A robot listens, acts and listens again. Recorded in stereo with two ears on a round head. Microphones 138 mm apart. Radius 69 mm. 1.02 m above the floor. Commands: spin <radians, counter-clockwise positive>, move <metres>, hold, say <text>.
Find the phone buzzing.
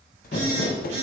spin -0.79
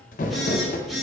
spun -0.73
say Facing the phone buzzing.